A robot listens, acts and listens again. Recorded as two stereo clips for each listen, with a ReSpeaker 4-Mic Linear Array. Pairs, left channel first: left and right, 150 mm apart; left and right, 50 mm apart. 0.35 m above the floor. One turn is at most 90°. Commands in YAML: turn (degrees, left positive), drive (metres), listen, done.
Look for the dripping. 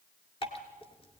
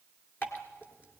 turn: 40
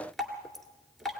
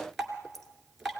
done: "Found it: dripping, straight ahead, 2 to 4 m away."